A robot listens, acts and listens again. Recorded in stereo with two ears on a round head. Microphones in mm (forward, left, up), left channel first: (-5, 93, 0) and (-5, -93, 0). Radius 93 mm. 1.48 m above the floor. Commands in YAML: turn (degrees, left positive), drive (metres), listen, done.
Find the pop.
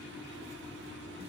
listen: true
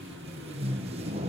listen: true
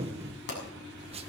turn: 55
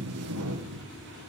listen: true
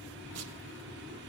done: "I heard a pop, but can't make it out now. It was about straight ahead or 70° left."